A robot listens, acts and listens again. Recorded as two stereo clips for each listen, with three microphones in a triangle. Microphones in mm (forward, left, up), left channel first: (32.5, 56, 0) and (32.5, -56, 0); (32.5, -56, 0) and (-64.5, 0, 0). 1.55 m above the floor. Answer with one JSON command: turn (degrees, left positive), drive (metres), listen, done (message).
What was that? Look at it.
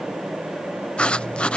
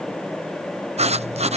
{"turn": 170}
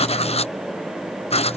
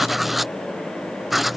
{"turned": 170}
{"turn": 60}
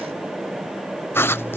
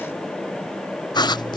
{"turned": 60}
{"turn": 20}
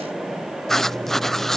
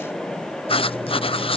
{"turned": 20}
{"done": "Found it: writing, straight ahead."}